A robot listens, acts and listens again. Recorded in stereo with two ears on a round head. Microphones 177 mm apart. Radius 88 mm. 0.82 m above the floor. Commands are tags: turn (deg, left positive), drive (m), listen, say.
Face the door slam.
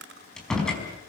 <turn deg="30"/>
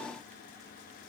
<listen/>
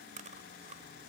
<say>I heard a door slam, but can't make it out now. It was about 25° right or 145° left.</say>